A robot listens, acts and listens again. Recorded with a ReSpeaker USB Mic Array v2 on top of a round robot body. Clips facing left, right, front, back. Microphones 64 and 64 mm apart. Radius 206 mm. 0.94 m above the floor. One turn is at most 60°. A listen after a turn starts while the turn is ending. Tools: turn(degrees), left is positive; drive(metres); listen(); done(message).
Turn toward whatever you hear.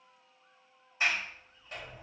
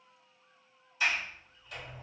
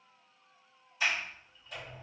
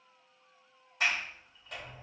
turn(degrees=60)
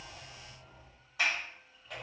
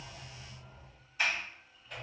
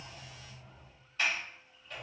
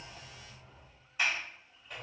turn(degrees=60)
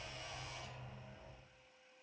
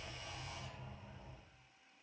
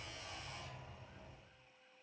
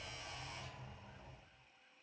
turn(degrees=60)
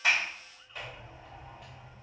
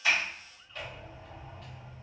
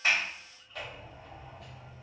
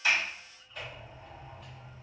turn(degrees=10)
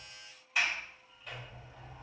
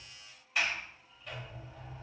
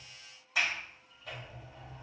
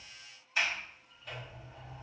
done("Facing the sliding door, under 1 m away.")